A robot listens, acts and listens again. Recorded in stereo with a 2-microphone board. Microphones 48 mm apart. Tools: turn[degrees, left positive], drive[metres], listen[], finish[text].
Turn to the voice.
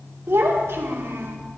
Thought: The child speaking: about 55° right or 125° right.
Action: turn[-55]
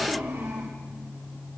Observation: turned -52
Thought: So it is at 70° right.
Action: turn[-70]
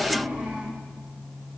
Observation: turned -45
Thought: The child speaking is now 25° right.
Action: turn[-25]
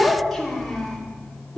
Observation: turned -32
Thought: The child speaking is now 10° left.
Action: turn[10]
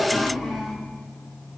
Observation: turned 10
Action: finish[Found it: a child speaking, straight ahead.]